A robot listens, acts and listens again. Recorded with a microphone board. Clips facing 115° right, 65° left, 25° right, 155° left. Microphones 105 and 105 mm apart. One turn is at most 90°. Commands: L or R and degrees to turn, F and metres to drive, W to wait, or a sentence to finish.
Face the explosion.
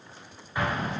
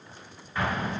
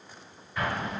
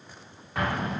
L90
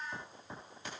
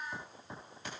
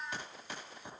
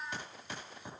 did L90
L85
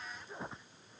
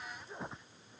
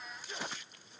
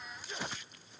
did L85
I heard an explosion from this way, but can't make it out now.